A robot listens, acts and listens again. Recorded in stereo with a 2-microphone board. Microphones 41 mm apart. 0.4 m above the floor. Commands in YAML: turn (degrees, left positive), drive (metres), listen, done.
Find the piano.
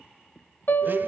turn: 60
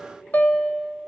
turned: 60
turn: 50
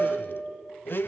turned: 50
turn: -10
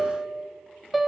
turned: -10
done: "Facing the piano."